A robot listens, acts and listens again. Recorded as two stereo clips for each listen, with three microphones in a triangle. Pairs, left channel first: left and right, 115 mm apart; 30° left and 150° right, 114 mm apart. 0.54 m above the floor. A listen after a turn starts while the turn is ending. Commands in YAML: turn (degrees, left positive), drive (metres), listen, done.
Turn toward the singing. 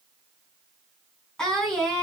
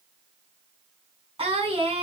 turn: 175
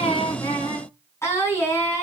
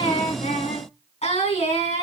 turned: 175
turn: 25
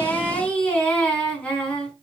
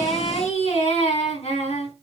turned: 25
turn: 10
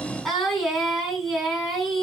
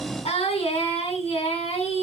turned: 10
done: "Facing the singing, over 4 m away."